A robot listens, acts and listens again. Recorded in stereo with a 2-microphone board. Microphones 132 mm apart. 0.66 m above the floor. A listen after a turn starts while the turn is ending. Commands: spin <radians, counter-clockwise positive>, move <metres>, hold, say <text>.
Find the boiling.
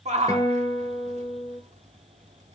hold
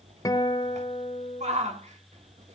hold
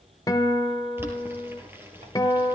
spin -0.26
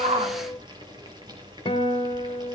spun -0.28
spin -2.53
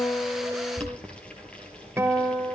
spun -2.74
spin 0.17
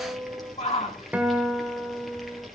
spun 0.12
say Facing the boiling, over 4 m away.